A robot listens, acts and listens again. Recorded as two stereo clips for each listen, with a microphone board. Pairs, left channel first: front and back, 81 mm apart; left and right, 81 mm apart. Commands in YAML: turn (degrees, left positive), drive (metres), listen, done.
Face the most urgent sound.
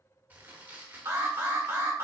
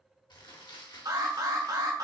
turn: -120
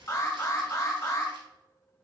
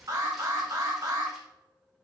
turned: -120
turn: -45
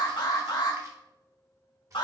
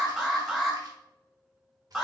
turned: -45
done: "Found it: an alarm, straight ahead, 1 to 2 m away."